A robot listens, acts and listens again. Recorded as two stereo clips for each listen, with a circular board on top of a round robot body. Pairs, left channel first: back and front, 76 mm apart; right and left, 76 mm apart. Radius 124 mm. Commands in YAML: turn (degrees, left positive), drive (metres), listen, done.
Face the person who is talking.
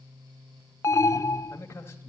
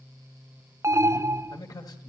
turn: -125
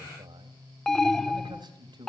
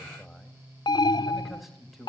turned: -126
done: "Facing the man speaking."